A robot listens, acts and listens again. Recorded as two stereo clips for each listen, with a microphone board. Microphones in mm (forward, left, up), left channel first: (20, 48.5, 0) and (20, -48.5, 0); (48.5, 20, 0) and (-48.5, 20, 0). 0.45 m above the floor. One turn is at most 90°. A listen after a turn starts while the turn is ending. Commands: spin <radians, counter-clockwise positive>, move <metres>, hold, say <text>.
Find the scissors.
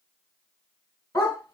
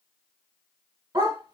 hold
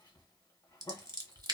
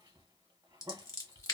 spin -0.87
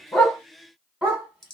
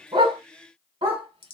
say Found it: scissors, straight ahead, under 1 m away.